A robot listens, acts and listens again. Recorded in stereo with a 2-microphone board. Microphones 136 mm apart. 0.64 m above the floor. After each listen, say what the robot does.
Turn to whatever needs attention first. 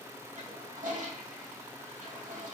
Keep listening.
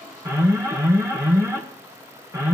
Turn 20° right.
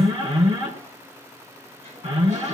Turn 135° right.
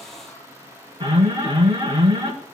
Turn 45° right.
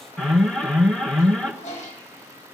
Found it: an alarm, straight ahead.